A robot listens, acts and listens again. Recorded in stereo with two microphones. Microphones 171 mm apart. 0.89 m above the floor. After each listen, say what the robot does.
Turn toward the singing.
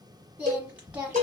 Turn 30° right.
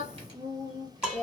Turn 140° right.
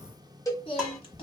Turn 40° left.
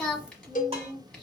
Found it: singing, straight ahead.